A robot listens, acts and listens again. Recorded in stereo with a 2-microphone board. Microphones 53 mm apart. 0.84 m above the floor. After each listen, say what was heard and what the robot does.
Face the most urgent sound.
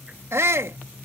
The shout: about 60° right or 120° right. Turn 60° right.
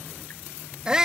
So it is at 15° right. Turn 15° right.
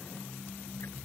Keep listening.
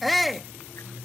Found it: a shout, straight ahead.